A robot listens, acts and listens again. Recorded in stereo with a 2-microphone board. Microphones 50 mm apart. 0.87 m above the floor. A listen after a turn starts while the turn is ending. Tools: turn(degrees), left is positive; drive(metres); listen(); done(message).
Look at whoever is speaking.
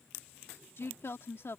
turn(degrees=60)
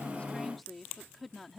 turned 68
done("Facing the woman speaking.")